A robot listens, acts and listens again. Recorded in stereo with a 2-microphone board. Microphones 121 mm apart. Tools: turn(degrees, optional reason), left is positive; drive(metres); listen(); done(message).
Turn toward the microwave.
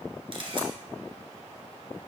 listen()
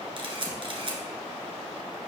listen()
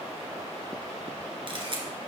done("I can't make out a microwave, only a camera shutter.")